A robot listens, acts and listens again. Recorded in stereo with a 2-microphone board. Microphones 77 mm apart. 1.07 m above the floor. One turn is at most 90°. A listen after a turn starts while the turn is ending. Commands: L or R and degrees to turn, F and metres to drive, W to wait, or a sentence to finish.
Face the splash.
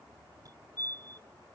W
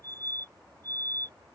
W
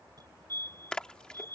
L30
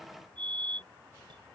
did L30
W
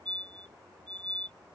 I heard a splash, but can't make it out now. It was about 20° right or 140° left.